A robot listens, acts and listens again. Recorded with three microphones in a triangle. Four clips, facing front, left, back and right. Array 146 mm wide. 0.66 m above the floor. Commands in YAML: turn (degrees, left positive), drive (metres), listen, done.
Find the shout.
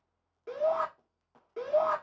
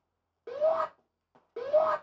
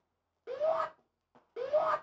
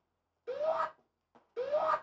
turn: 85
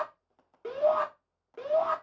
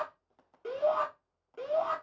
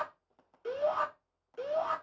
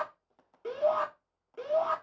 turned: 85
done: "Found it: a shout, straight ahead, 2 to 4 m away."